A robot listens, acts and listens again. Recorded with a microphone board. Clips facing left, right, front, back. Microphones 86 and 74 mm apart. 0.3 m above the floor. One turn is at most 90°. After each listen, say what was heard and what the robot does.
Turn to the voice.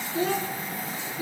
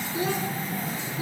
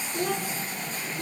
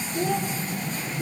The child speaking: 15° right. Turn 15° right.
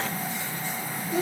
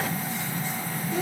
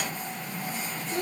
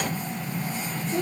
Facing the child speaking, 2 to 4 m away.